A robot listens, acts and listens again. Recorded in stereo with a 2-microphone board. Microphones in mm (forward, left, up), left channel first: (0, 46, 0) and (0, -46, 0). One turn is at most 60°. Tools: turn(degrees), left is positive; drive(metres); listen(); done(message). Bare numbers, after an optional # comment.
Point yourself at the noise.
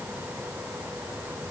listen()
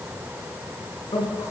# The man speaking: about 55° left or 125° left.
turn(55)
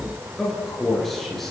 done("Found it: a man speaking, straight ahead, over 4 m away.")